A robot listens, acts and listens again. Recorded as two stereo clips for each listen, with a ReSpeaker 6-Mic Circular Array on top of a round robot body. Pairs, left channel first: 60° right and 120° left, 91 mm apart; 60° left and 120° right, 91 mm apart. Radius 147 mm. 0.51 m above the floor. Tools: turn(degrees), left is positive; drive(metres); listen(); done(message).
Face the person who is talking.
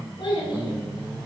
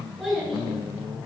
turn(degrees=-30)
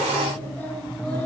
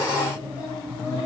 turn(degrees=10)
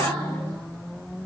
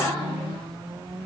listen()
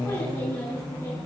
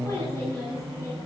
done("Facing the child speaking.")